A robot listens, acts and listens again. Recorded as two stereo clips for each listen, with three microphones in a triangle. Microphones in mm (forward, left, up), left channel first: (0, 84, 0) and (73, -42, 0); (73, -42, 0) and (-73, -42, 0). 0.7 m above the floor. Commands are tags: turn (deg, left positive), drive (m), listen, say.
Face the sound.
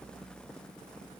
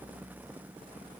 <listen/>
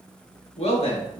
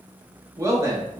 <turn deg="115"/>
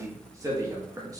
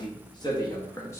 <turn deg="-40"/>
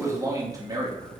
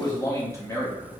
<turn deg="-55"/>
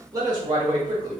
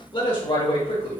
<turn deg="-20"/>
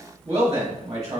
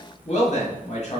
<say>Found it: a man speaking, straight ahead, 1 to 2 m away.</say>